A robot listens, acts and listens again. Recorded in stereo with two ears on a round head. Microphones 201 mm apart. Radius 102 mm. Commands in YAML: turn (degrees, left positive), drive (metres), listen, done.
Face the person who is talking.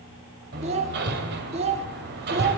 turn: -30
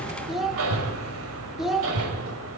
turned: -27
done: "Found it: a child speaking, straight ahead, 1 to 2 m away."